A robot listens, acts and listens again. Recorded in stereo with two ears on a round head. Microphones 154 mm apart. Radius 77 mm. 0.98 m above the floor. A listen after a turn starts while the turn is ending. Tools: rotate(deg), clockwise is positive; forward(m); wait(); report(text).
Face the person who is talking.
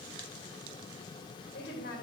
rotate(-65)
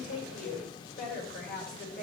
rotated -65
rotate(-50)
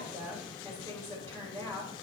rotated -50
rotate(-15)
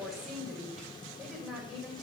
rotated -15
report("Found it: a woman speaking, straight ahead.")